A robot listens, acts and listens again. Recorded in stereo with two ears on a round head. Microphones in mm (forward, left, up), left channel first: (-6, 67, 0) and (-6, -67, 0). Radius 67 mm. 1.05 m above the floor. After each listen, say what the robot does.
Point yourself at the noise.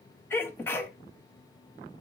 Turn 30° left.
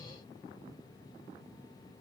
Keep listening.
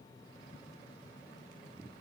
I heard a sneeze, but can't make it out now. It was about 15° right or 135° left.